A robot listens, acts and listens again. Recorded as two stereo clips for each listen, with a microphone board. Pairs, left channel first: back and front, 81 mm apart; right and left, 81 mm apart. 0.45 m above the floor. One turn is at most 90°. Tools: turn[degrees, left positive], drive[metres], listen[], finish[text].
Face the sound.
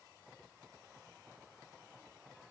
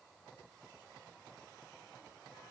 Action: listen[]
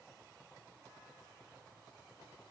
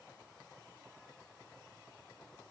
Action: listen[]
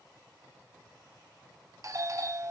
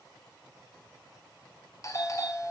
Thought: The doorbell: 45° right.
Action: turn[-45]
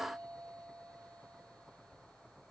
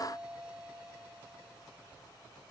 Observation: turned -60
Thought: The doorbell is now 15° left.
Action: turn[15]
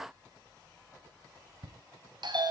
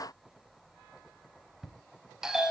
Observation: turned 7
Action: finish[Facing the doorbell, 2 to 4 m away.]